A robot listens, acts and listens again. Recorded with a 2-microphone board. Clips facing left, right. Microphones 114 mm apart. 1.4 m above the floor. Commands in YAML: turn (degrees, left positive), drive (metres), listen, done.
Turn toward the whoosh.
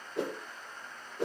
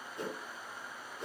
turn: 75
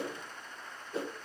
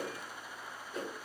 turn: 30
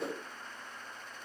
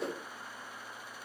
done: "Facing the whoosh, 1 to 2 m away."